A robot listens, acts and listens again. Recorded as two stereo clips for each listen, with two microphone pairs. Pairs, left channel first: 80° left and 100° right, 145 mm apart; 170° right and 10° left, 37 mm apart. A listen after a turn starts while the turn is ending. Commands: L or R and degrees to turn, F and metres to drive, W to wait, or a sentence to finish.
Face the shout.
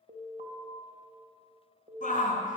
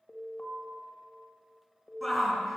L100
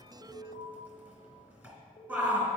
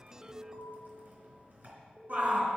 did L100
R25
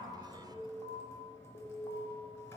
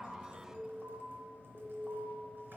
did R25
W
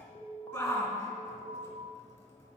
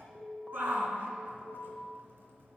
Found it: a shout, straight ahead, 2 to 4 m away.